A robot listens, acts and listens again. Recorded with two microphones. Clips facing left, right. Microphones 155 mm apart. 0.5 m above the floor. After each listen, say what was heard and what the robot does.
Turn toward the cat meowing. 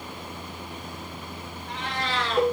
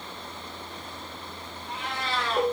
Turn 30° right.
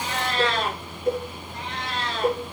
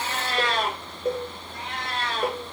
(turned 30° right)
So it is at 130° right. Turn 130° right.
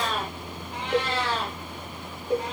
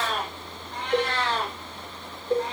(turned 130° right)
The cat meowing is now 10° left. Turn 10° left.
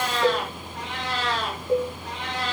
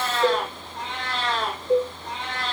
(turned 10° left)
Facing the cat meowing, 2 to 4 m away.